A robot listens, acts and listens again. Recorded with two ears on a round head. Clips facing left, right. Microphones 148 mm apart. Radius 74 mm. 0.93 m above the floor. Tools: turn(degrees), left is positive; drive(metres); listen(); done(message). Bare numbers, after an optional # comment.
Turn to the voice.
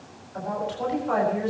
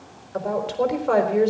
# The woman speaking: about 70° right or 110° right.
turn(-70)
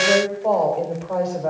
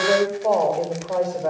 done("Facing the woman speaking, over 4 m away.")